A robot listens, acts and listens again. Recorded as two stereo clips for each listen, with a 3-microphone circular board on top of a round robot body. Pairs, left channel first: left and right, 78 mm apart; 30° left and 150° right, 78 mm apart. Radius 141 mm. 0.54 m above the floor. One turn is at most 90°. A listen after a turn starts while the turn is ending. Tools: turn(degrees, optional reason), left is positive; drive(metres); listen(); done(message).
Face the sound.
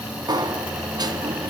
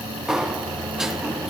turn(degrees=-65, reason="The sliding door: 65° right.")
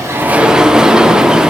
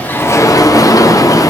turn(degrees=-10, reason="The sliding door is now 10° right.")
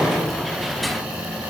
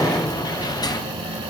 done("Found it: a sliding door, straight ahead, under 1 m away.")